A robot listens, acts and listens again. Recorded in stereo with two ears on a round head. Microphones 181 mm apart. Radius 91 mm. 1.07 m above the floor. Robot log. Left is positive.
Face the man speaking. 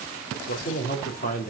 note: The man speaking: about 40° left or 140° left.
cmd yaw +40
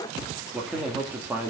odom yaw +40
note: So it is at 10° right.
cmd yaw -10
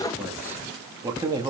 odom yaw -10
note: The man speaking is now 20° right.
cmd yaw -20
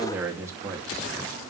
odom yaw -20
note: The man speaking is now 15° right.
cmd yaw -15
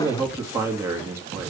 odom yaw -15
note: The man speaking is now 15° right.
cmd yaw -15
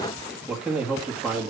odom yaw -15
end: Facing the man speaking.